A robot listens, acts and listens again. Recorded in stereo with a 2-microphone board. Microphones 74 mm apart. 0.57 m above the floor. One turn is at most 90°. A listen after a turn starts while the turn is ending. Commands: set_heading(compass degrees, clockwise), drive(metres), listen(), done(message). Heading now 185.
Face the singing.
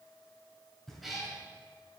listen()
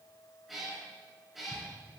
listen()
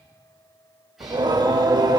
set_heading(275)
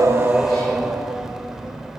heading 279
done("Facing the singing, under 1 m away.")